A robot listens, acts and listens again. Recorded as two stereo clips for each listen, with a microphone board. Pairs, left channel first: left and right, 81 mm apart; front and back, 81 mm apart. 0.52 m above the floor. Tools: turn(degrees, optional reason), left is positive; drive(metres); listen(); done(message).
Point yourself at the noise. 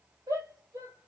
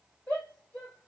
turn(degrees=-70, reason="The shout: 70° right.")
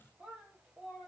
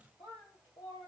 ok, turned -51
turn(degrees=-20, reason="The shout is now 20° right.")
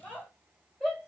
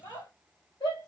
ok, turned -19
done("Facing the shout.")